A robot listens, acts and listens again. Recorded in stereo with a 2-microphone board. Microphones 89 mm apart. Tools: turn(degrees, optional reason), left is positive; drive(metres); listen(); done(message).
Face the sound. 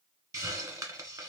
turn(degrees=-40, reason="The hiss: about 40° right or 140° right.")
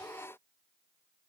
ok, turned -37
turn(degrees=-100, reason="So it is at 100° right.")
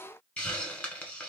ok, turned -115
turn(degrees=15, reason="The hiss is now 15° left.")
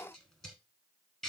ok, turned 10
done("Found it: a hiss, straight ahead.")